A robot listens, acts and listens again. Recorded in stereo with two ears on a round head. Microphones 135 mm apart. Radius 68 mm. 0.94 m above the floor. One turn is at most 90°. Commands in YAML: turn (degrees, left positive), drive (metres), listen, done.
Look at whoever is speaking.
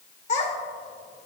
turn: 45
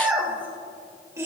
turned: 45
turn: -20
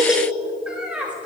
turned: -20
turn: -10
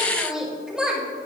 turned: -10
done: "Facing the child speaking, 2 to 4 m away."